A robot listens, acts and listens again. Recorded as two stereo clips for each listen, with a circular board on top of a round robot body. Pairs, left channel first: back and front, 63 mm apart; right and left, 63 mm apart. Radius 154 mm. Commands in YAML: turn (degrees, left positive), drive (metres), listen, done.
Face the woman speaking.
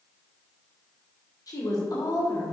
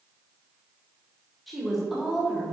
turn: 170
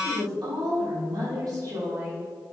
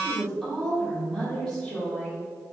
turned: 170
turn: -15
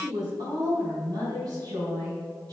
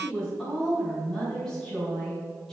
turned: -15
done: "Facing the woman speaking, 2 to 4 m away."